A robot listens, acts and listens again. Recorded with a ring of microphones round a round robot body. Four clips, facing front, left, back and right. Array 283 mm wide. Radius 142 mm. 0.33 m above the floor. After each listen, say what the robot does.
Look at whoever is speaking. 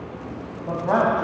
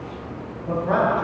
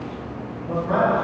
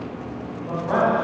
Turn 20° left.
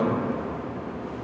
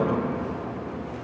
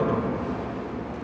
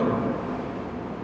Found it: a man speaking, straight ahead, 1 to 2 m away.